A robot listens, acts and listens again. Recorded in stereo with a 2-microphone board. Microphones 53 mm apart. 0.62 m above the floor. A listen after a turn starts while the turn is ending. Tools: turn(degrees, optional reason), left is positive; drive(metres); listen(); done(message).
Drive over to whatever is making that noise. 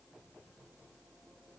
listen()
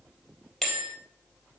turn(degrees=30)
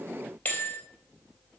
turn(degrees=150, reason="So it is at 150° left.")
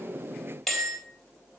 turn(degrees=10, reason="The bell is now 10° left.")
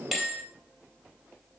drive(metres=1.0)
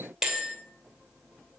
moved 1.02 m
drive(metres=1.0)
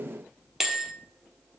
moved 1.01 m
drive(metres=1.0)
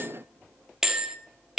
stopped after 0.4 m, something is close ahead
turn(degrees=-15, reason="The bell is now 15° right.")
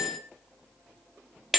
done("I am next to the bell.")